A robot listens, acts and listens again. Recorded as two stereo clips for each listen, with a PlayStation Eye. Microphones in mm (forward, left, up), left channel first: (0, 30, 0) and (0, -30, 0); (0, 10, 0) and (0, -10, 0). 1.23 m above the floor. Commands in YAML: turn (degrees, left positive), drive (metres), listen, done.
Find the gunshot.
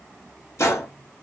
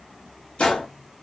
turn: 55
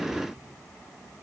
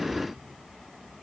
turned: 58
listen: true
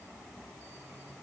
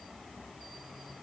done: "I heard a gunshot, but can't make it out now. It was about 5° right or 65° left."